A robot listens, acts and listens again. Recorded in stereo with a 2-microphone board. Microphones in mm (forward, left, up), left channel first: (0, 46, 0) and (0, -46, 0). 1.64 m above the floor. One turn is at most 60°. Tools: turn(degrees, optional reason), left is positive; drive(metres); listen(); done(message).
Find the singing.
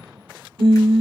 turn(degrees=-60, reason="The singing: about 70° right or 110° right.")
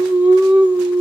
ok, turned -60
turn(degrees=-15, reason="So it is at 15° right.")
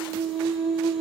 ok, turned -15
done("Facing the singing.")